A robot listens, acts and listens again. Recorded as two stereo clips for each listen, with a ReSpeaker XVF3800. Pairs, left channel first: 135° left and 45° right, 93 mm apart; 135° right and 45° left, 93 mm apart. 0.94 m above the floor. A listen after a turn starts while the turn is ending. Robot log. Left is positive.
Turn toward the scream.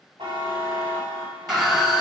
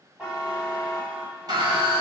note: The scream: 35° left.
cmd yaw +35
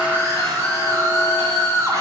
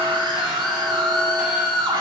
end: Found it: a scream, straight ahead.